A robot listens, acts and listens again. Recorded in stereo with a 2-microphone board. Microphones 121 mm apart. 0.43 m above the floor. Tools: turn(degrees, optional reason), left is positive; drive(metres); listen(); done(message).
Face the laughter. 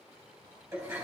listen()
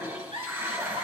turn(degrees=-45, reason="The laughter: about 45° right or 135° right.")
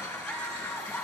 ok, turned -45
listen()
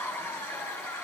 listen()
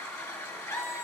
turn(degrees=25, reason="So it is at 25° left.")
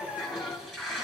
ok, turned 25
done("Found it: laughter, straight ahead, 2 to 4 m away.")